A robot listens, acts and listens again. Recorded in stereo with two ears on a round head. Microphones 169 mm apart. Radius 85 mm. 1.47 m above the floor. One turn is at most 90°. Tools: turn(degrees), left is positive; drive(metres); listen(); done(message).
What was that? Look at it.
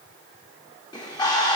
turn(degrees=25)
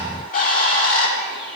turn(degrees=90)
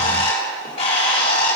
turn(degrees=30)
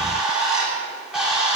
done("Found it: a bird, straight ahead.")